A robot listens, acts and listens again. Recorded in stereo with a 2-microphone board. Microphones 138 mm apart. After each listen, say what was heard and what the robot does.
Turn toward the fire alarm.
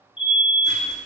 The fire alarm: about 40° left or 140° left. Turn 40° left.
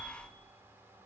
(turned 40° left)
Keep listening.
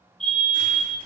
So it is at 10° left. Turn 10° left.
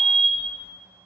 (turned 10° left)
Facing the fire alarm, 2 to 4 m away.